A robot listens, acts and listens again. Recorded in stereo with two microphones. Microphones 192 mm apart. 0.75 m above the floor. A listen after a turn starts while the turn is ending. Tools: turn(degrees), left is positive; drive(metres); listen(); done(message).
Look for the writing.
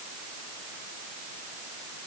listen()
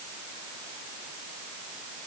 listen()
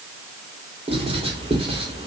turn(degrees=-30)
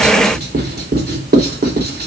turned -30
turn(degrees=-115)
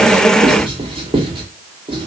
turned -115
turn(degrees=-30)
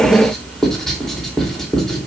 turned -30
done("Found it: writing, straight ahead.")